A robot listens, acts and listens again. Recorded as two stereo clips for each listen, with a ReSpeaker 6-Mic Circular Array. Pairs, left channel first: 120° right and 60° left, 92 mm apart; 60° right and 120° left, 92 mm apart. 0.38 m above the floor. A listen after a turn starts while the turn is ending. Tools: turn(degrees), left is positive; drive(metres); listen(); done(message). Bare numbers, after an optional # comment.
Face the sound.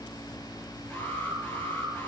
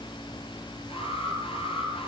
# The alarm: 55° right.
turn(-55)
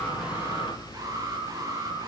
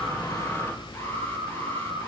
done("Facing the alarm.")